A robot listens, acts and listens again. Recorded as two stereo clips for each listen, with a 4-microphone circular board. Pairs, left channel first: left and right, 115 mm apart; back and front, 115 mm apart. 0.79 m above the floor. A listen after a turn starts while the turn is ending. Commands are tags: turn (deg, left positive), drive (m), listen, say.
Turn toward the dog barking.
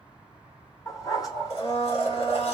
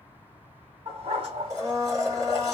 <turn deg="35"/>
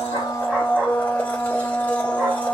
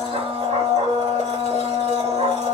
<listen/>
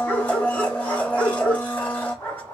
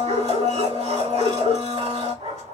<turn deg="15"/>
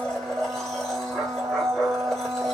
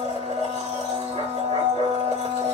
<listen/>
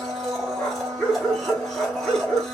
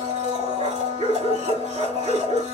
<say>Found it: a dog barking, straight ahead.</say>